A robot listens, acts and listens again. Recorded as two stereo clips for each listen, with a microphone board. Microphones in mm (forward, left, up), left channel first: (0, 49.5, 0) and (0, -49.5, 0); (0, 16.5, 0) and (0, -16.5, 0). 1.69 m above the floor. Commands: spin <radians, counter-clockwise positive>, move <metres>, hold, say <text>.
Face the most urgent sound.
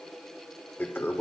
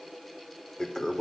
hold
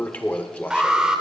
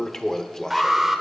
spin -0.52
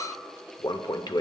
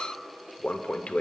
hold
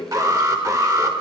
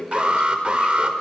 spin -2.44
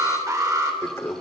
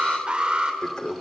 spin -0.61
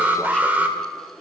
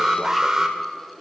spin -0.35
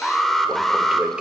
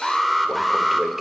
say Facing the alarm.